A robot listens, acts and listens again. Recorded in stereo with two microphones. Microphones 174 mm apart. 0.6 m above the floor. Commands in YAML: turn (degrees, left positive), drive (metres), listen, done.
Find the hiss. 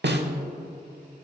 listen: true
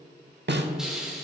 turn: -30
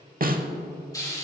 turn: 25
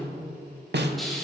done: "Found it: a hiss, straight ahead, 2 to 4 m away."